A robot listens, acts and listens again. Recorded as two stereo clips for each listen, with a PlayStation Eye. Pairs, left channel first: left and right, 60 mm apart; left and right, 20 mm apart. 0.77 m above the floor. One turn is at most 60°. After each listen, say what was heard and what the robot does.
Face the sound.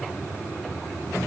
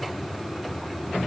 Keep listening.
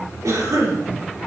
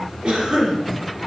The cough: about 65° right or 115° right. Turn 60° right.
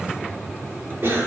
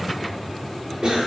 So it is at 45° right. Turn 45° right.
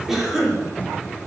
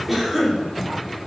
Facing the cough, 2 to 4 m away.